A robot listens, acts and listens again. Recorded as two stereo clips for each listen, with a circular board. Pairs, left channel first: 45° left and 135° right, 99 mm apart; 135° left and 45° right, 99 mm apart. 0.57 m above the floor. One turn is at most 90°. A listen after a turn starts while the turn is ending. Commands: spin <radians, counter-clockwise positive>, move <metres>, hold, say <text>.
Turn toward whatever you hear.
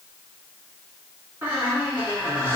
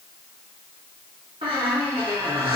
spin -1.13
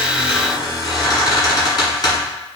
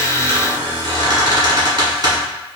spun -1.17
say Found it: a squeak, straight ahead.